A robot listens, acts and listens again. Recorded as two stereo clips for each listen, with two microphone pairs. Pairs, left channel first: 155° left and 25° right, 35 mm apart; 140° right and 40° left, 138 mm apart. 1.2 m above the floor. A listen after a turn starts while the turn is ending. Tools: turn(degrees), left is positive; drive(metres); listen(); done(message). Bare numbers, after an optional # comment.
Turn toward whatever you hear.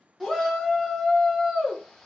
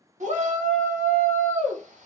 # The shout: 70° left.
turn(70)
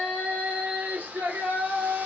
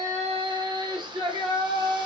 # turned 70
# The shout is now 15° right.
turn(-15)
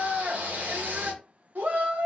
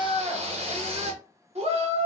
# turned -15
done("Found it: a shout, straight ahead.")